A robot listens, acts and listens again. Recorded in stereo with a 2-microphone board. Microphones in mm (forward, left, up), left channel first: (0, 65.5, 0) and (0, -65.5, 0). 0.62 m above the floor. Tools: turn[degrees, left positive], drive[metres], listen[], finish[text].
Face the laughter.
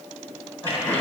Thought: The laughter: about 15° left or 165° left.
Action: turn[15]
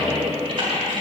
Thought: The laughter: about 35° left or 145° left.
Action: turn[35]
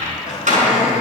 Thought: So it is at 105° left.
Action: turn[105]
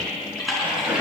Thought: The laughter is now 10° right.
Action: turn[-10]
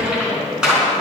Thought: The laughter is now 10° right.
Action: turn[-10]
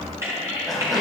Action: finish[Facing the laughter, 2 to 4 m away.]